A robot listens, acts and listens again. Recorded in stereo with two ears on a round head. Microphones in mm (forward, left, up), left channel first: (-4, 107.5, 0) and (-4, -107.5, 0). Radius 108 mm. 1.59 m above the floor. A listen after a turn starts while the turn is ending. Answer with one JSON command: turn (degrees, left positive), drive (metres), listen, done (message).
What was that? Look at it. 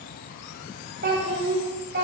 {"turn": -50}
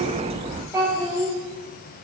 {"turn": -15}
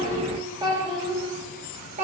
{"turn": -30}
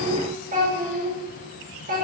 {"turn": -35}
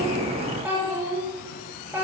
{"turn": -10}
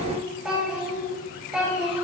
{"done": "Found it: a child speaking, straight ahead."}